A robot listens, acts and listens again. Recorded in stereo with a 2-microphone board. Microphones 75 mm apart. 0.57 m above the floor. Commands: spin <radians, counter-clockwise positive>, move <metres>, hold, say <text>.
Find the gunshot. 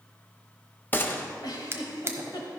spin 0.52
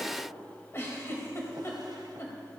hold
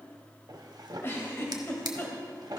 say I heard a gunshot, but can't make it out now. It was about straight ahead or 120° left.